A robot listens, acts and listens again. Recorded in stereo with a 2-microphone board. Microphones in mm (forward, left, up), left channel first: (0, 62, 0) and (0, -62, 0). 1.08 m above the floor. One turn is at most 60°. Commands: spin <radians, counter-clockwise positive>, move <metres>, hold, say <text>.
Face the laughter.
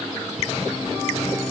hold
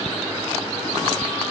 hold
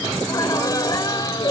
spin 0.61
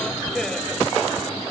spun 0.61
hold
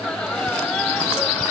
spin 0.17
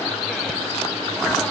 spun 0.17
hold
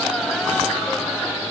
hold
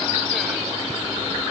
say Facing where the laughter came from. I can't hear it now.